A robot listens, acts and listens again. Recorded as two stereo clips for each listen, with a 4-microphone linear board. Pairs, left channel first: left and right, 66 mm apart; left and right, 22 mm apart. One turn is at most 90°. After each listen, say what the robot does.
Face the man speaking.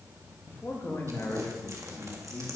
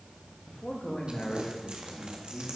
Turn 45° left.
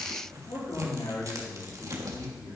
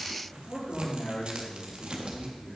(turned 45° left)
Turn 85° left.
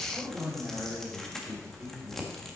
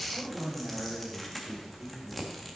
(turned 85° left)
Facing the man speaking, 2 to 4 m away.